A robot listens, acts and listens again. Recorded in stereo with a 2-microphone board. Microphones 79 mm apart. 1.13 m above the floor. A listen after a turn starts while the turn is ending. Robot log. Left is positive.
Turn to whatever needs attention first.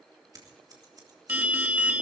note: The alarm: about 20° right or 160° right.
cmd yaw -20
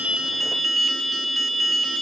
end: Facing the alarm.